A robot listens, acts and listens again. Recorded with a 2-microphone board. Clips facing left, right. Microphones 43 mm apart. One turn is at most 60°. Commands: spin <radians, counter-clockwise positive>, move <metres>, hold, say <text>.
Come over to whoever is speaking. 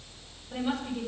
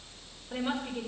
spin -0.61
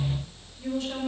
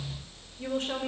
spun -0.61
spin -1.05
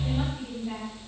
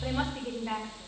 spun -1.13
spin -0.79
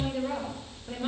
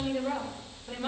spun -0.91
move 1.0
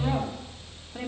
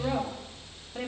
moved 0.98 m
spin 0.26
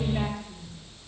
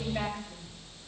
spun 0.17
hold
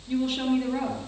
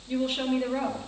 move 1.0
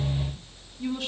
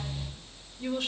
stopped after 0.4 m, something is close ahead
say Arrived at the woman speaking, straight ahead.